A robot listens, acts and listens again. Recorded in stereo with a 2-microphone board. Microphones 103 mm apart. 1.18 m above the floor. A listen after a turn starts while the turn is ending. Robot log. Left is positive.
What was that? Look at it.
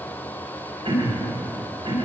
note: The throat clearing: about 65° right or 115° right.
cmd yaw -65
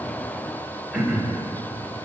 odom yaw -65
end: Facing the throat clearing, 1 to 2 m away.